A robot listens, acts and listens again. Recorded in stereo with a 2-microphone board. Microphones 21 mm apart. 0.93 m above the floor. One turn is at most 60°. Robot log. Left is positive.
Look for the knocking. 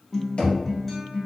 note: The knocking: about 55° left or 125° left.
cmd yaw +55
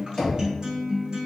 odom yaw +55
note: So it is at 30° left.
cmd yaw +30
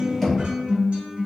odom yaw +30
note: The knocking is now 10° left.
cmd yaw +10
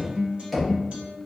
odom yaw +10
end: Found it: knocking, straight ahead, 1 to 2 m away.